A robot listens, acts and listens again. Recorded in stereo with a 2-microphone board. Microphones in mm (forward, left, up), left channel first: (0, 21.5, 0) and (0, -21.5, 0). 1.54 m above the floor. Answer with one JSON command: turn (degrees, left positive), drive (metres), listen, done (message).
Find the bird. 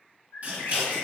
{"turn": 65}
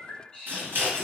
{"turn": 20}
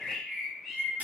{"done": "Found it: a bird, straight ahead."}